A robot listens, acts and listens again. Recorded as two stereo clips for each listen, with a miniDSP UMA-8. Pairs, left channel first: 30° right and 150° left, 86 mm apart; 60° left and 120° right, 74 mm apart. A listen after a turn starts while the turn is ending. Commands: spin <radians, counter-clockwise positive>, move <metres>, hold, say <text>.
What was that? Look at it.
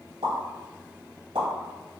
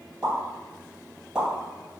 spin 2.79
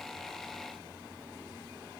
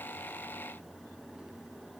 say I heard a pop from this way, but can't make it out now.